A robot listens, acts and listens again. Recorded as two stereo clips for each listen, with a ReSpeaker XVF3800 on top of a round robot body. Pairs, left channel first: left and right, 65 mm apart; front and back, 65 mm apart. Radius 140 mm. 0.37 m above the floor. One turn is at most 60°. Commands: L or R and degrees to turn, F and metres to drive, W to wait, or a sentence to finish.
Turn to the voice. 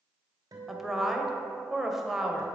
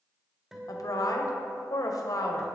Facing the woman speaking, 1 to 2 m away.